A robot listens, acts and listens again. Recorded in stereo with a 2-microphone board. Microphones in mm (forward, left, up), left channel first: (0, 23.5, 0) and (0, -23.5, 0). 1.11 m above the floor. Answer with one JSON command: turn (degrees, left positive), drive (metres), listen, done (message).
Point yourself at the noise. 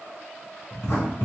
{"turn": 65}
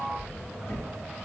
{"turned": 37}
{"turn": 80}
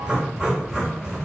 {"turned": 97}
{"turn": -15}
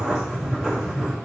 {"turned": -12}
{"done": "Facing the writing."}